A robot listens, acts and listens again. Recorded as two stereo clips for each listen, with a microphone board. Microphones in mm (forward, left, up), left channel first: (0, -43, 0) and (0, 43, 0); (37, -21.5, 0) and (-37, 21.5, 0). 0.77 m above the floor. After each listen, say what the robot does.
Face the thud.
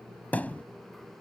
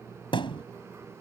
Turn 20° right.
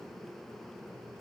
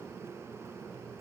I heard a thud from this way, but can't make it out now.